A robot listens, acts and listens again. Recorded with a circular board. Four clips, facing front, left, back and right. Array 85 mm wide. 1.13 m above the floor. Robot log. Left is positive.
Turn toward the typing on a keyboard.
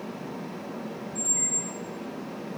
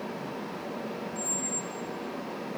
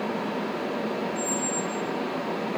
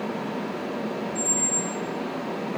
cmd idle
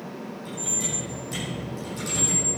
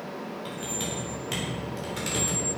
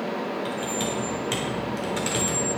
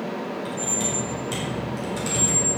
note: The typing on a keyboard: 170° left.
cmd yaw +170
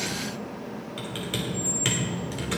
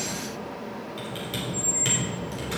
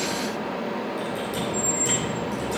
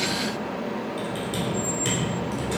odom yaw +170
note: The typing on a keyboard is now 10° left.
cmd yaw +10
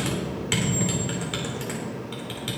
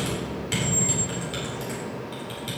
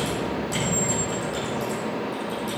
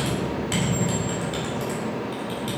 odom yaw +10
end: Facing the typing on a keyboard, 2 to 4 m away.